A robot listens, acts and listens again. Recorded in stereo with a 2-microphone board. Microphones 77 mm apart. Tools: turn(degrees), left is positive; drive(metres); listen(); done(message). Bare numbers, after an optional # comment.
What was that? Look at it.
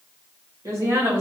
# The woman speaking: about 35° right or 145° right.
turn(-35)
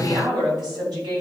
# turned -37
# So it is at 120° right.
turn(-120)
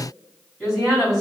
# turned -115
# The woman speaking is now 10° right.
turn(-10)
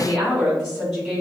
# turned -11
done("Facing the woman speaking, over 4 m away.")